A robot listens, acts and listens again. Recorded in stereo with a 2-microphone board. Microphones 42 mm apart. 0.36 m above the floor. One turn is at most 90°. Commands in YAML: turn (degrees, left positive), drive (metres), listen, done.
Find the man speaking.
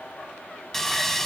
listen: true
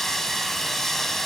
listen: true
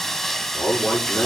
turn: 90
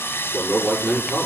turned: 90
turn: 10
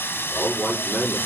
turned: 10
done: "Facing the man speaking."